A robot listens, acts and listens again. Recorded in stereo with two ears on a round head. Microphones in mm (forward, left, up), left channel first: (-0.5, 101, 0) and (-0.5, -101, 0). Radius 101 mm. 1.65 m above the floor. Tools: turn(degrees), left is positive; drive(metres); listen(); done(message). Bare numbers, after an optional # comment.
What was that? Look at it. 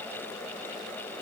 listen()
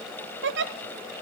# The giggle: about 55° right or 125° right.
turn(-55)
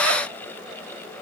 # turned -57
listen()
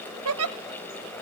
# So it is at 70° right.
turn(-70)
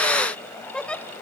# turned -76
done("Facing the giggle.")